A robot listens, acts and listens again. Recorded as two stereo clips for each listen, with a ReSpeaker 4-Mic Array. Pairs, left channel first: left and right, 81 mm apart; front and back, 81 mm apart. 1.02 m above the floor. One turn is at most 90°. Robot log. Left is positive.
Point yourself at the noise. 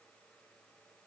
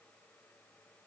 cmd idle
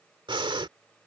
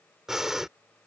note: The breathing: 95° right.
cmd yaw -90
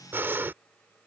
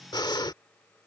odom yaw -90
note: The breathing is now 25° right.
cmd yaw -25
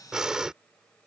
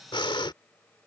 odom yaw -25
end: Facing the breathing.